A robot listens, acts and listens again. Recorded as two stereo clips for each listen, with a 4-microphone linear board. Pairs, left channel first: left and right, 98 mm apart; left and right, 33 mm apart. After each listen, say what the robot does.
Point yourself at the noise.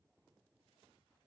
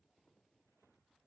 Keep listening.
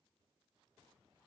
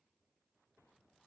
Keep listening.
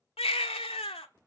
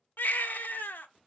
Turn 75° left.
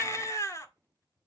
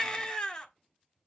Turn 30° left.
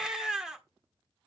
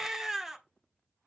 Facing the baby crying, 1 to 2 m away.